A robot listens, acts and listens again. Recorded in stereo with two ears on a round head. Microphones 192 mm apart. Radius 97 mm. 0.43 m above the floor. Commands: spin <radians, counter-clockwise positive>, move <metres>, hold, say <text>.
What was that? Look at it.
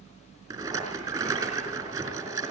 spin -0.35
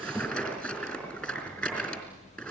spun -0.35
say Facing the rattle, over 4 m away.